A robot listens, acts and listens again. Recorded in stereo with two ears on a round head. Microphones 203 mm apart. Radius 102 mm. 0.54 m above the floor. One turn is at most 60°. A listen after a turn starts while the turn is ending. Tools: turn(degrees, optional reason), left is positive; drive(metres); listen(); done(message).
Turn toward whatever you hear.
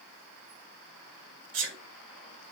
turn(degrees=-60, reason="The sneeze: about 60° right or 120° right.")
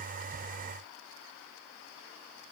listen()
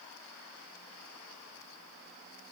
done("I heard a sneeze, but can't make it out now. It was about straight ahead or 60° right.")